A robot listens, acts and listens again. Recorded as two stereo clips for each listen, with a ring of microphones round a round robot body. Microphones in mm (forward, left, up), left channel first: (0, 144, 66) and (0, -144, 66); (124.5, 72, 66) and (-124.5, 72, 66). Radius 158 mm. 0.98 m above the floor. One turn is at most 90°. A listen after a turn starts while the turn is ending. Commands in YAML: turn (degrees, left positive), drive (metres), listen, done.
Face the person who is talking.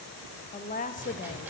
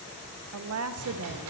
turn: 90
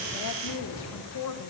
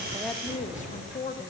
turn: 60
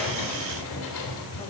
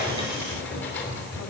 listen: true
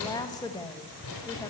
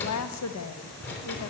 turn: 15
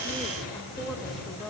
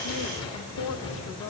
done: "Facing the woman speaking, 1 to 2 m away."